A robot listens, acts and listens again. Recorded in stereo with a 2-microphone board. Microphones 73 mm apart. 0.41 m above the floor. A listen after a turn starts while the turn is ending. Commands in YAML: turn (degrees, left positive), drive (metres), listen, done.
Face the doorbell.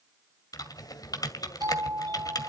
turn: -65
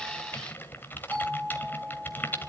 turn: -35
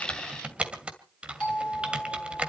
turn: 15
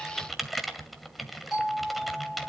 done: "Facing the doorbell."